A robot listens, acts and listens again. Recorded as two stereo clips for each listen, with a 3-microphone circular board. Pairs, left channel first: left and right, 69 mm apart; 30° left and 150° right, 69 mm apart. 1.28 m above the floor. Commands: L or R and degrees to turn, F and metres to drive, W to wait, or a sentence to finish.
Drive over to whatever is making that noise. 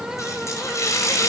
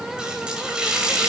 L135
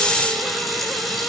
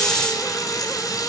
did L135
F1.0
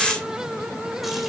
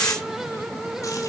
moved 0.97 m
W
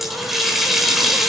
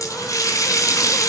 F1.0
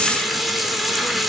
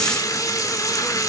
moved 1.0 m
F1.0
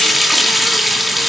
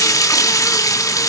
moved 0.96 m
F1.0
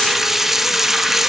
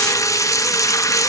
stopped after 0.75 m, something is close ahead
Arrived at the running tap, straight ahead.